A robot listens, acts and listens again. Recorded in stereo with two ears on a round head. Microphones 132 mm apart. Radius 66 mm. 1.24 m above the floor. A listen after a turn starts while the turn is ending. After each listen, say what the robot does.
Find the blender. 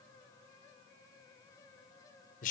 Keep listening.
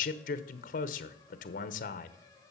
Keep listening.
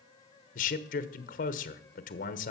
I can't make out a blender to turn to.